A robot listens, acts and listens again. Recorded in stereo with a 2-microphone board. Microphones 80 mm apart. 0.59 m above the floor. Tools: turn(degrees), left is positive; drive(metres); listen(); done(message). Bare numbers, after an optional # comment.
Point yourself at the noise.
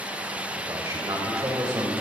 # The man speaking: about 40° right or 140° right.
turn(-40)
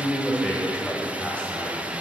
# So it is at 15° left.
turn(15)
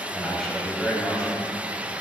# The man speaking is now 10° left.
turn(10)
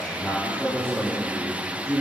# The man speaking is now 10° left.
turn(10)
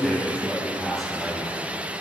done("Facing the man speaking.")